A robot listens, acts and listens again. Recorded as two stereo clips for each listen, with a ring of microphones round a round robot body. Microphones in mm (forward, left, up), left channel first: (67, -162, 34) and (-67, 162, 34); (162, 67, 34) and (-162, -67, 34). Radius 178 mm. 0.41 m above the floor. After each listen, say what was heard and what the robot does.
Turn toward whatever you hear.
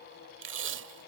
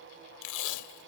The tape being pulled: 55° left. Turn 55° left.
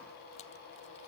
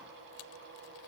Keep listening.
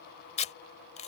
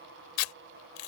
Facing the tape being pulled.